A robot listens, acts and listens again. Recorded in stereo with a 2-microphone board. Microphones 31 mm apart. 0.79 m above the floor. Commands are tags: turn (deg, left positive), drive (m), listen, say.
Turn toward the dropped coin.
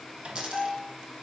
<turn deg="-25"/>
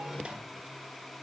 <listen/>
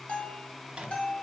<say>I heard a dropped coin, but can't make it out now. It was about straight ahead or 130° right.</say>